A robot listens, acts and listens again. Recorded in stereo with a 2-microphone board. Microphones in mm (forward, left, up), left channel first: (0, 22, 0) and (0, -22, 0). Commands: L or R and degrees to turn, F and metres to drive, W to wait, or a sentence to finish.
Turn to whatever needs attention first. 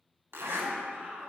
R30
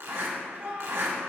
R115
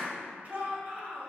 R40
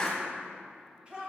R30
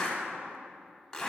W
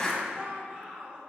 R30
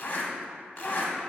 W
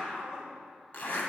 Found it: a shout, straight ahead, 1 to 2 m away.